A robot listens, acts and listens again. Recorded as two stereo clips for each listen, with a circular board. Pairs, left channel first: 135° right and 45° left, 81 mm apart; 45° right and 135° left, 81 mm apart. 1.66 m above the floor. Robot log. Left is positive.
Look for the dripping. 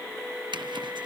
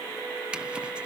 cmd idle
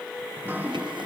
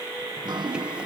note: The dripping: 110° left.
cmd yaw +110
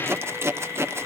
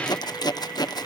cmd idle
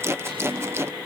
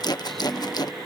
note: The dripping is now 40° left.
cmd yaw +40
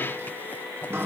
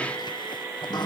note: The dripping is now 15° right.
cmd yaw -15
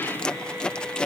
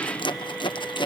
cmd idle
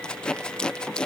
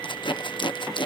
cmd idle
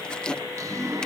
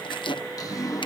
end: Facing the dripping.